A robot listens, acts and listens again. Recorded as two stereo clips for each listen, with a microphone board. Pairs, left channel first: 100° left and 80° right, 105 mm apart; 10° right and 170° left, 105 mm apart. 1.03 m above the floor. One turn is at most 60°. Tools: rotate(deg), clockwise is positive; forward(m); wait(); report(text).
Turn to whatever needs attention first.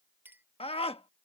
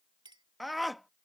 rotate(-60)
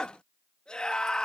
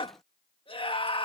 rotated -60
rotate(-20)
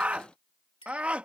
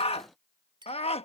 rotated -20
report("Facing the scream.")